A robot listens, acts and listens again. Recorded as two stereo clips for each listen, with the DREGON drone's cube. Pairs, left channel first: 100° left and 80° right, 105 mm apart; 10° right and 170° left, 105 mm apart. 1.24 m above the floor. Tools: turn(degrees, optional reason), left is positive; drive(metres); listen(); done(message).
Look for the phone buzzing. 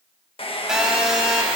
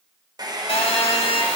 done("Found it: a phone buzzing, straight ahead, 2 to 4 m away.")